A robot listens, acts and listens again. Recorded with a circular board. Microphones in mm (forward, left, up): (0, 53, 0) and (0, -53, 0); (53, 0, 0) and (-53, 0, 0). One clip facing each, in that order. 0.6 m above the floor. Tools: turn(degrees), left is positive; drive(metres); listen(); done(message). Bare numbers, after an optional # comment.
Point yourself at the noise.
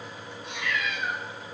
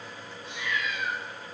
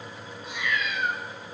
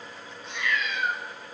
# The cat meowing: 90° left.
turn(90)
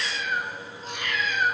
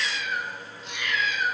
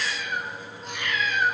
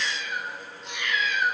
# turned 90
# The cat meowing is now 50° left.
turn(50)
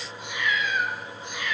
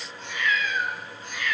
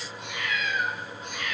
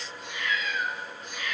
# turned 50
# The cat meowing is now 20° left.
turn(20)
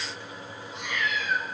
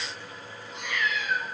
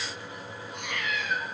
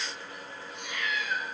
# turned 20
done("Found it: a cat meowing, straight ahead.")